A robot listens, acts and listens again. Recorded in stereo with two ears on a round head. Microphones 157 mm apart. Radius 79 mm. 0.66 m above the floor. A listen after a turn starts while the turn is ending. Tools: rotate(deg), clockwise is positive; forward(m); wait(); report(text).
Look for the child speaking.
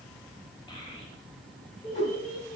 rotate(-55)
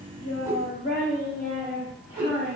rotate(-35)
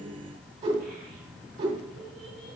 wait()
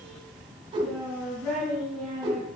rotate(-10)
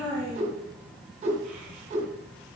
report("Facing the child speaking, 2 to 4 m away.")